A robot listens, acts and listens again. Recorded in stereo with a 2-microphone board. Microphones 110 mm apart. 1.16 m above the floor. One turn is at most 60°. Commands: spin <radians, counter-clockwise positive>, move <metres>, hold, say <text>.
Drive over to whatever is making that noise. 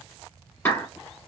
spin 0.26
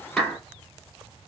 move 1.0
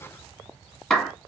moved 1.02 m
move 1.0
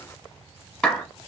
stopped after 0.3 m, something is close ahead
say Arrived at the clap, straight ahead.